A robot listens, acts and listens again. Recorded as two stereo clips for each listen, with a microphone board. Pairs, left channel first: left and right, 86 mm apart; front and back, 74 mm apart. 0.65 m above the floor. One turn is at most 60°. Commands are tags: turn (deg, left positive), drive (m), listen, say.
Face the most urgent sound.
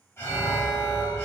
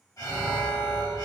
<turn deg="35"/>
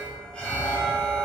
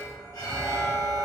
<turn deg="15"/>
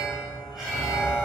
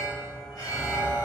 <say>Found it: an alarm, straight ahead.</say>